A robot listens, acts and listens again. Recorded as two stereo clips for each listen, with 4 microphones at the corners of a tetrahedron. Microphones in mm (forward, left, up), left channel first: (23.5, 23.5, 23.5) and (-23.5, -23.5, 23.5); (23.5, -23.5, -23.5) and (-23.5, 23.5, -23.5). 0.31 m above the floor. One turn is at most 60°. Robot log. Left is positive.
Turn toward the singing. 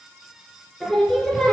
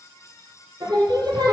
note: The singing: 125° left.
cmd yaw +60
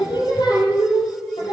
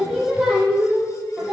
note: The singing is now 50° left.
cmd yaw +50
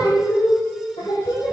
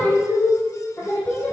note: The singing is now 20° left.
cmd yaw +20
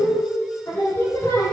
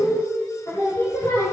end: Facing the singing, over 4 m away.